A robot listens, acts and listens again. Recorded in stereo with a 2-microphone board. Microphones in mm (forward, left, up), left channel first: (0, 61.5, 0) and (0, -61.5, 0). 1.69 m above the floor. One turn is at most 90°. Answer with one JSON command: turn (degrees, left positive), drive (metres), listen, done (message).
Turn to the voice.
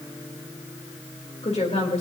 {"turn": 60}
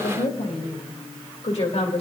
{"turn": 60}
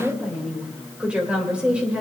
{"turn": -10}
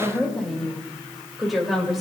{"done": "Facing the woman speaking, 2 to 4 m away."}